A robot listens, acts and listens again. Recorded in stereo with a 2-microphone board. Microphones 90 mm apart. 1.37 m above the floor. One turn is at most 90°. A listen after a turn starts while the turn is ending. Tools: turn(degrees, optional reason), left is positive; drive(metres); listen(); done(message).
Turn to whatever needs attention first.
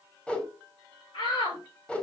turn(degrees=65, reason="The shout: about 65° left or 115° left.")
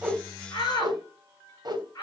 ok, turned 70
turn(degrees=45, reason="So it is at 45° left.")
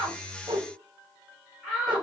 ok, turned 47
done("Found it: a shout, straight ahead, over 4 m away.")